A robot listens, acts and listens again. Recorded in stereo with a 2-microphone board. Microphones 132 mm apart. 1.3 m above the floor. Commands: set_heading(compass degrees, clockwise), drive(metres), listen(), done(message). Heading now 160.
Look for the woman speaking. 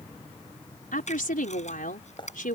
set_heading(70)
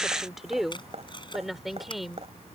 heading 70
done("Found it: a woman speaking, straight ahead.")